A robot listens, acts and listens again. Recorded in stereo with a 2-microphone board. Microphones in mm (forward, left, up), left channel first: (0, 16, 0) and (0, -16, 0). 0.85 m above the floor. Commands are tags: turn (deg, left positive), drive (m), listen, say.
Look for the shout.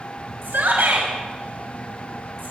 <turn deg="-90"/>
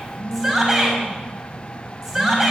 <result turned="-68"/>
<turn deg="-15"/>
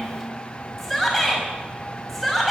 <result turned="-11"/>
<say>Facing the shout, over 4 m away.</say>